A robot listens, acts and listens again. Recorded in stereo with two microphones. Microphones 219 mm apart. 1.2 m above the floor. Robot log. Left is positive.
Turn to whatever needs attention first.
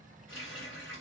cmd idle
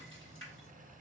cmd idle
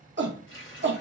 note: The shout: about 55° right or 125° right.
cmd yaw -55
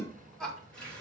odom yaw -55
end: Facing the shout.